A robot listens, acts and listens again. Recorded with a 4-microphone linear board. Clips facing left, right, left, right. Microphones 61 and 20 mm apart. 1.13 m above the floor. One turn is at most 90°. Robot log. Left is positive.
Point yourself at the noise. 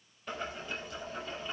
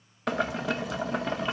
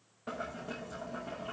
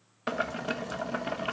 cmd yaw -90
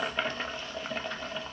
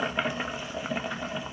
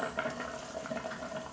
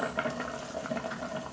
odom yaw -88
note: So it is at 10° right.
cmd yaw -10
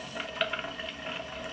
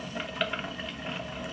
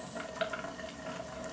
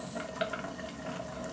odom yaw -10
end: Found it: boiling, straight ahead.